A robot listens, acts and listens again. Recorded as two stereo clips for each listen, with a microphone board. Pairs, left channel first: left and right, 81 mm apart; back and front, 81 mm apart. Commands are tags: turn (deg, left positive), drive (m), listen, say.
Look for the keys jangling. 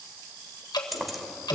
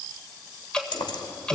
<turn deg="180"/>
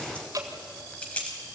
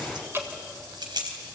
<turn deg="15"/>
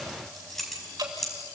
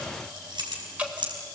<say>Facing the keys jangling.</say>